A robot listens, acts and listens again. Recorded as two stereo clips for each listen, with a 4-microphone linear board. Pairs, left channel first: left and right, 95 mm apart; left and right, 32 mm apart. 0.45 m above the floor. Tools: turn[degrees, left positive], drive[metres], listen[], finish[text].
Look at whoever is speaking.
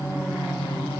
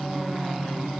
Action: listen[]
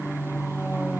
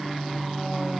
Action: listen[]
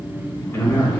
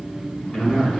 Thought: The man speaking: about 30° left or 150° left.
Action: turn[30]
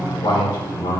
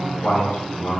Thought: So it is at 115° left.
Action: turn[115]
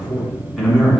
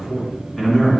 Action: finish[Facing the man speaking.]